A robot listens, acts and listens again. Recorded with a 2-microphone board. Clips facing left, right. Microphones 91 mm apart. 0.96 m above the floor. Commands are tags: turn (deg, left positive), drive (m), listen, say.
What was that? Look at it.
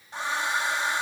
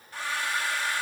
<turn deg="25"/>
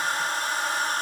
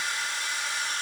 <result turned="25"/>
<turn deg="135"/>
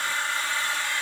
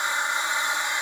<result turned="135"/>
<turn deg="-20"/>
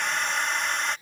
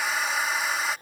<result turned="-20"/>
<say>Found it: a hair dryer, straight ahead.</say>